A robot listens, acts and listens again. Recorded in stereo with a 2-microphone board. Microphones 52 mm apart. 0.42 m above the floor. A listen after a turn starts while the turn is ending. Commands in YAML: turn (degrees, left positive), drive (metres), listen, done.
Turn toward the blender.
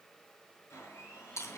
turn: 55
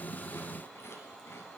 done: "Facing the blender."